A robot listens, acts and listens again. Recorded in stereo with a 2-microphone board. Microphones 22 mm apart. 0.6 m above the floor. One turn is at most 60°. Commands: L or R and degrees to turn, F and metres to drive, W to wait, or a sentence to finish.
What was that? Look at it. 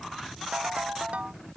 R60
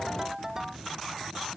R20
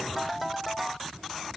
R10
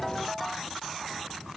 W
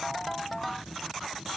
Found it: a ringtone, straight ahead.